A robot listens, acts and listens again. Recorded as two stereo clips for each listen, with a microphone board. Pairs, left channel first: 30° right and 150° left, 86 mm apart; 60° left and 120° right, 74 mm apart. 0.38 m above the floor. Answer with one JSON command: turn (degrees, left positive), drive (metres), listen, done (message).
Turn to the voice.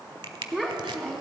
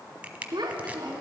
{"turn": -125}
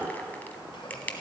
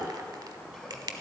{"listen": true}
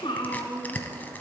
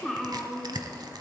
{"turn": -30}
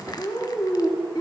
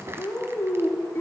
{"done": "Found it: a child speaking, straight ahead."}